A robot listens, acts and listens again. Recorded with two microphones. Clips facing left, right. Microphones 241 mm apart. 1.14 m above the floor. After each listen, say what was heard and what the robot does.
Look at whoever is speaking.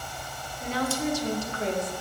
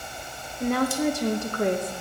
The woman speaking: about 60° right or 120° right. Turn 60° right.
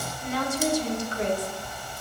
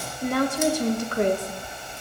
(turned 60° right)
So it is at 60° right. Turn 60° right.
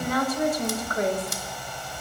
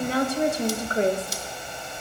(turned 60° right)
The woman speaking is now 30° right. Turn 30° right.
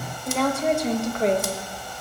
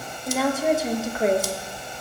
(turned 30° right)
Facing the woman speaking.